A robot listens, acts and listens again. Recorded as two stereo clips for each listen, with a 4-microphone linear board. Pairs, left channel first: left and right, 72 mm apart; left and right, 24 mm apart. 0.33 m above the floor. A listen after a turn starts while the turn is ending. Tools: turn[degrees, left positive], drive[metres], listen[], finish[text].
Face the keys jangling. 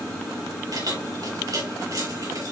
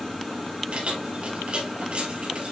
Thought: The keys jangling: about 55° right or 125° right.
Action: turn[-55]
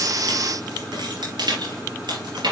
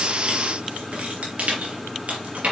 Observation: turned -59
Thought: So it is at 75° right.
Action: turn[-75]
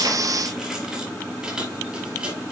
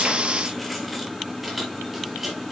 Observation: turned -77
Thought: The keys jangling is now 10° right.
Action: turn[-10]
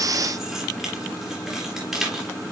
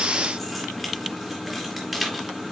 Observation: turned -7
Action: finish[Facing the keys jangling.]